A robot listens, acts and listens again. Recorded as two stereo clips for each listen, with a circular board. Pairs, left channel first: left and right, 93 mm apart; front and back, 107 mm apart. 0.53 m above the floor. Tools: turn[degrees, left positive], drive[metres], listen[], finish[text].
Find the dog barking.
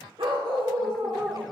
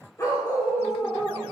Thought: The dog barking: 60° right.
Action: turn[-60]
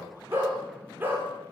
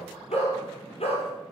Thought: The dog barking is now 20° right.
Action: turn[-20]
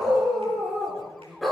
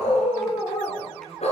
Action: finish[Facing the dog barking.]